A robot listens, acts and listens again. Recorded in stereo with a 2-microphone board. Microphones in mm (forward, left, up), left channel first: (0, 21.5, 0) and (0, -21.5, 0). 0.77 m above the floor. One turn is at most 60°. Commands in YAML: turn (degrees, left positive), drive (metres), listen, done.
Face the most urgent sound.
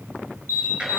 turn: -60
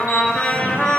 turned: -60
listen: true
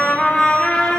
listen: true
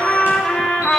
done: "I heard an alarm, but can't make it out now. It was about 15° right or 45° right."